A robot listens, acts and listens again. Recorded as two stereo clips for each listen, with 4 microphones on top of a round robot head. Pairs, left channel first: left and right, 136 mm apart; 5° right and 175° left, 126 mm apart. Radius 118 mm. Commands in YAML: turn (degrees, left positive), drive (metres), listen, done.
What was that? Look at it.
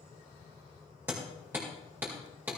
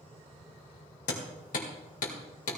turn: -10
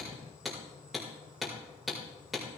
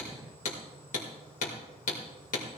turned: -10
done: "Facing the hammering."